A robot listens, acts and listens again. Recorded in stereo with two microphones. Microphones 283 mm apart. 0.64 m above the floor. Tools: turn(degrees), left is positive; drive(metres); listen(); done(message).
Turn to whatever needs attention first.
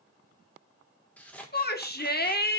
turn(degrees=35)
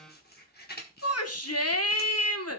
turn(degrees=110)
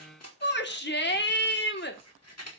turn(degrees=45)
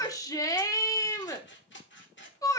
turn(degrees=15)
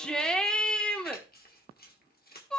done("Facing the shout.")